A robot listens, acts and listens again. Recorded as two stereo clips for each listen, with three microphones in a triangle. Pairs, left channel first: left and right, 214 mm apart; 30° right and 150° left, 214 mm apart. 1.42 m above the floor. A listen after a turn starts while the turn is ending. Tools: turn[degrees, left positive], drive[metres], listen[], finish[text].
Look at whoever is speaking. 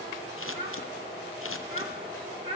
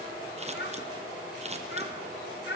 Thought: The child speaking: 30° right.
Action: turn[-30]
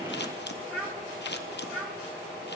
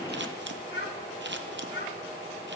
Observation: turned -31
Action: finish[Facing the child speaking, 1 to 2 m away.]